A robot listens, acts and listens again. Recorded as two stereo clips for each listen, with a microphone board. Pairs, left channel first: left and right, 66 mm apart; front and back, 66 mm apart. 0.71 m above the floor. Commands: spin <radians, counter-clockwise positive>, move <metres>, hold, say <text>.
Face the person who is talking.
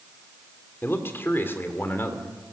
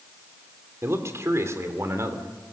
spin 2.44
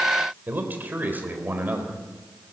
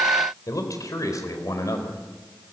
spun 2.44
spin -0.52
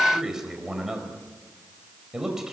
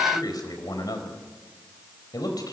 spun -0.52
say Facing the man speaking.